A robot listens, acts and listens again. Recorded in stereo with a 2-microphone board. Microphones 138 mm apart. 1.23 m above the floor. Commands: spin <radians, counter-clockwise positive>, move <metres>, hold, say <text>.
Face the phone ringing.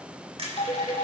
spin 0.79
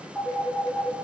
say Facing the phone ringing.